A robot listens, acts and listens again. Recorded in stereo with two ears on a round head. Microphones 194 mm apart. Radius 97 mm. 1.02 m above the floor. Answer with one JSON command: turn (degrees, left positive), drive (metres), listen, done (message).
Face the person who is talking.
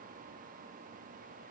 {"listen": true}
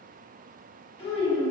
{"turn": 25}
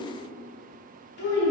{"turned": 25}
{"turn": 125}
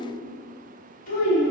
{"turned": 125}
{"turn": 40}
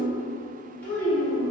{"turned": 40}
{"turn": 10}
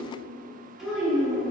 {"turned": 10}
{"done": "Facing the child speaking."}